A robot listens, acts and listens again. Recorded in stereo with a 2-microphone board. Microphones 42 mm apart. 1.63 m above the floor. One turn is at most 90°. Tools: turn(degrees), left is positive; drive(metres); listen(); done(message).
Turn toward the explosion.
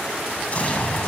turn(degrees=40)
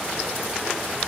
listen()
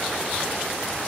done("I heard an explosion, but can't make it out now. It was about straight ahead or 100° left.")